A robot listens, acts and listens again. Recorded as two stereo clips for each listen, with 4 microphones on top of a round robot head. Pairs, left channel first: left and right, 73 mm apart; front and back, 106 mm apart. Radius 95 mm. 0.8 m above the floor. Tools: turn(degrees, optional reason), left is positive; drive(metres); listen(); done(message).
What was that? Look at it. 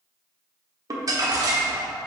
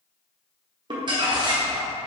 turn(degrees=-130, reason="The crumpling: 130° right.")
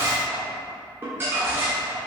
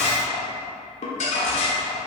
turn(degrees=-25, reason="The crumpling is now 25° right.")
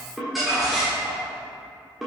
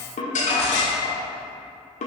done("Found it: crumpling, straight ahead, 1 to 2 m away.")